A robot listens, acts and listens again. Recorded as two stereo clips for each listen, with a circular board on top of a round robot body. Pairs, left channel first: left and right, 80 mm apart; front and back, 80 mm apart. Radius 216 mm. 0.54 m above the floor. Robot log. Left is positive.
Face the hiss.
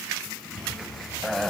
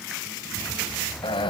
cmd idle
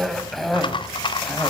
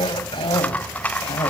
cmd idle
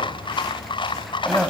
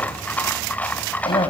end: I can't make out a hiss to turn to.